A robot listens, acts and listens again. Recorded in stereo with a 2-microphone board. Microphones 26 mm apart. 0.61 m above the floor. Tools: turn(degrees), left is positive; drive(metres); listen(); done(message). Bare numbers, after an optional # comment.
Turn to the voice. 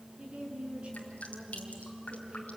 # The woman speaking: about 45° right or 135° right.
turn(-45)
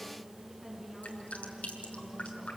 done("Found it: a woman speaking, straight ahead.")